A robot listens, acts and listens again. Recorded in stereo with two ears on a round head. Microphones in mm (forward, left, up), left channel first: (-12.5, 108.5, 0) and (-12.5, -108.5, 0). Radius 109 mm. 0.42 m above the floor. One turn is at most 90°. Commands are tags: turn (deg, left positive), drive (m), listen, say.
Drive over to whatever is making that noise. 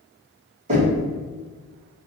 <turn deg="-35"/>
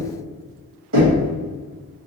<turn deg="-90"/>
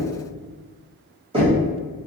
<turn deg="-30"/>
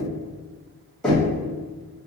<drive m="1.0"/>
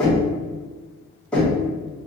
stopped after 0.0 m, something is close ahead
<say>Blocked. The knocking is further on, straight ahead.</say>